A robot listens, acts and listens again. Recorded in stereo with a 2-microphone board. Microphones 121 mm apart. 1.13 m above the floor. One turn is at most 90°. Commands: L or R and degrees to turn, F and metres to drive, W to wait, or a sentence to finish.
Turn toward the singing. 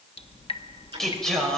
L30
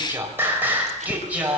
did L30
R10
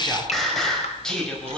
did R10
Facing the singing, over 4 m away.